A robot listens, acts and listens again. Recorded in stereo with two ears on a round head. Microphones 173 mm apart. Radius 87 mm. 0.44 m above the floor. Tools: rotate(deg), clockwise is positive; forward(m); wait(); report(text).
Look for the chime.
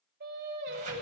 wait()
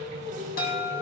rotate(-50)
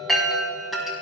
report("Facing the chime, 2 to 4 m away.")